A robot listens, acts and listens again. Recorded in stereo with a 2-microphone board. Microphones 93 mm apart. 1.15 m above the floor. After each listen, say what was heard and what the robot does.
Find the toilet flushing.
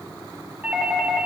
Keep listening.
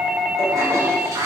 The toilet flushing: about 35° right or 145° right. Turn 35° right.
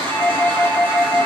So it is at 115° right. Turn 115° right.
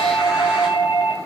Keep listening.
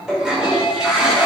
Found it: a toilet flushing, straight ahead, over 4 m away.